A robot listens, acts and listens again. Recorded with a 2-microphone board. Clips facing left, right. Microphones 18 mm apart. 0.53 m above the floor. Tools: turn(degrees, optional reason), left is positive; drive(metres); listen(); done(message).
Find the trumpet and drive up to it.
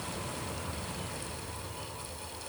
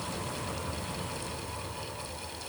listen()
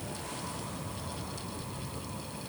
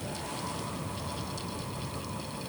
listen()
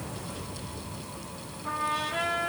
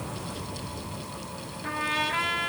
turn(degrees=-70, reason="The trumpet: about 70° right or 110° right.")
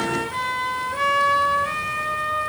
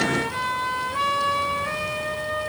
drive(metres=1.0)
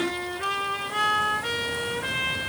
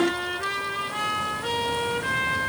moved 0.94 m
drive(metres=1.0)
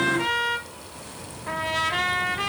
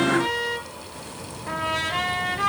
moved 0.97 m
turn(degrees=10, reason="The trumpet is now 10° left.")
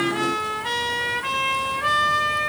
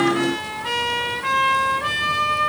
drive(metres=1.0)
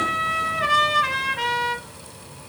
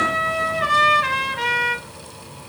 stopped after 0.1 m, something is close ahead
done("I am next to the trumpet.")